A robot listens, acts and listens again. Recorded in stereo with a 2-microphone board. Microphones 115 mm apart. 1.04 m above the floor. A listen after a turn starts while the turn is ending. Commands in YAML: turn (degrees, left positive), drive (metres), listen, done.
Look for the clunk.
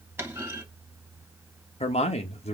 turn: -20
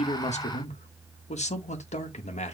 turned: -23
listen: true
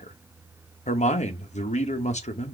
done: "I heard a clunk, but can't make it out now. It was about 5° left or 140° right."